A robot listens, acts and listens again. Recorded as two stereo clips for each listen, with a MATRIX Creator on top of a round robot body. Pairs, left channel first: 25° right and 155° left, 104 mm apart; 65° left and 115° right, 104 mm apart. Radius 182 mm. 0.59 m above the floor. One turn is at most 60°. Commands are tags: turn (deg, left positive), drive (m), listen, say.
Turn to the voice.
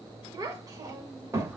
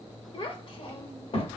<turn deg="60"/>
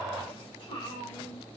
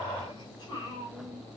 <turn deg="15"/>
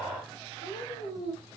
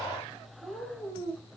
<say>Found it: a child speaking, straight ahead.</say>